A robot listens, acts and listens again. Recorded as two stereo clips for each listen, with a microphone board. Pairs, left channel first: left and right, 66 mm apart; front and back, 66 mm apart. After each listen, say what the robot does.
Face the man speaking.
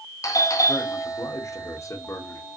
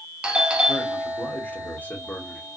Turn 60° left.
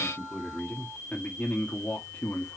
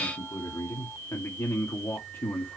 Turn 45° left.
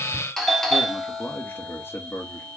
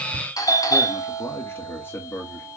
Turn 45° left.
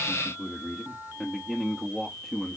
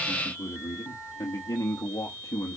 Facing the man speaking.